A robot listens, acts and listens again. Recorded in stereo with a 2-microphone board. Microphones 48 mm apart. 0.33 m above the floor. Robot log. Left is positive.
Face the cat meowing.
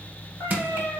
note: The cat meowing: about 70° left or 110° left.
cmd yaw +70
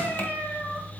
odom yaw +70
note: So it is at 50° left.
cmd yaw +50
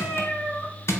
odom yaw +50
note: The cat meowing is now 25° left.
cmd yaw +25
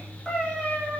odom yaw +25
note: The cat meowing is now 20° left.
cmd yaw +20
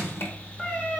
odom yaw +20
note: The cat meowing is now 10° left.
cmd yaw +10
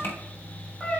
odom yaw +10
note: The cat meowing is now 15° left.
cmd yaw +15
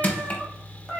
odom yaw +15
end: Found it: a cat meowing, straight ahead.